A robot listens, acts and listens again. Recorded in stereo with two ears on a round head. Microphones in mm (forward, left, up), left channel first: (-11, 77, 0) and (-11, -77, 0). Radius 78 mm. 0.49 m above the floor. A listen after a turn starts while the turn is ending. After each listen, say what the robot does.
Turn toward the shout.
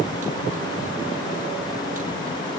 Keep listening.
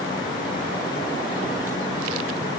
Keep listening.
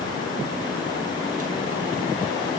I can't make out a shout to turn to.